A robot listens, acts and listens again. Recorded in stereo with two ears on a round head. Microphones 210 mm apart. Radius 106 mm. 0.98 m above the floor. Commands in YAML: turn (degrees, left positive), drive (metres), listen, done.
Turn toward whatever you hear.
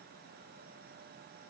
listen: true
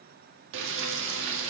turn: -55
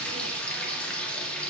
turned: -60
done: "Facing the frying."